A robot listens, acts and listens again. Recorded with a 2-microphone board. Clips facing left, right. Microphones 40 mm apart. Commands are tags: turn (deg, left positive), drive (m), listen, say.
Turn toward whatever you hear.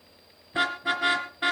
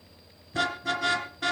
<turn deg="25"/>
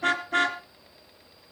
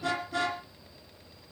<turn deg="130"/>
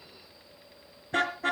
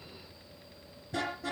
<turn deg="40"/>
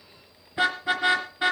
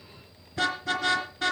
<turn deg="15"/>
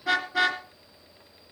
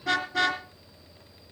<say>Facing the car horn, 2 to 4 m away.</say>